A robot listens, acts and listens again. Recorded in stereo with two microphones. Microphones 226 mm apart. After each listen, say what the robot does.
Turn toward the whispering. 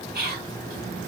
Turn 45° right.
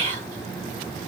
Turn 80° right.
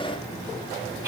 Turn 15° right.
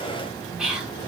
Found it: whispering, straight ahead.